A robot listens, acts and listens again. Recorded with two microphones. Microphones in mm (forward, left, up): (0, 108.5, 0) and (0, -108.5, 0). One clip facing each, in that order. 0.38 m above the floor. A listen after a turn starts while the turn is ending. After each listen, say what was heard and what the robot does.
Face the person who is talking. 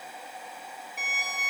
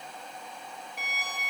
Keep listening.
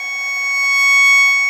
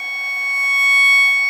Keep listening.
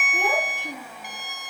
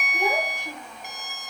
The child speaking: about 60° left or 120° left. Turn 60° left.
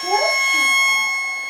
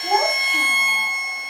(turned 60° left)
Keep listening.
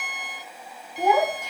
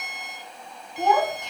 So it is at 10° left. Turn 10° left.
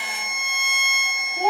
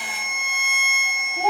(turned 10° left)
Facing the child speaking.